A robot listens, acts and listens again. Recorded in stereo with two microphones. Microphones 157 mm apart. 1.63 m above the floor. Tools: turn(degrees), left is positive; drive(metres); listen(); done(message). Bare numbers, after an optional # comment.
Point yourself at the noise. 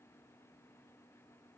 listen()
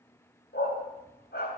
turn(90)
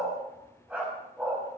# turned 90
done("Facing the dog barking.")